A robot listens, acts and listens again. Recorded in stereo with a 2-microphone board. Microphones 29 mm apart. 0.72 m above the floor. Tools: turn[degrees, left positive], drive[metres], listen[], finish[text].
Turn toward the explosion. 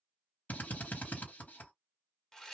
Action: listen[]
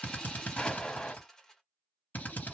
Thought: The explosion: about 25° left or 155° left.
Action: turn[25]
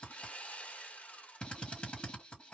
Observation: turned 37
Action: listen[]
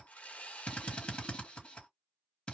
Action: finish[I heard an explosion, but can't make it out now. It was about 10° right or 120° left.]